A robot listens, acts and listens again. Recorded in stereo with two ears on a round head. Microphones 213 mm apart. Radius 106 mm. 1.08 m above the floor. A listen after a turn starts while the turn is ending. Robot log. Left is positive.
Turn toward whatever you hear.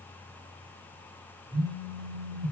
cmd yaw -90
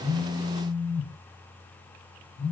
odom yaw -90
note: So it is at 10° left.
cmd yaw +10
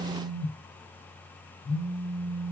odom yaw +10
end: Found it: a phone buzzing, straight ahead.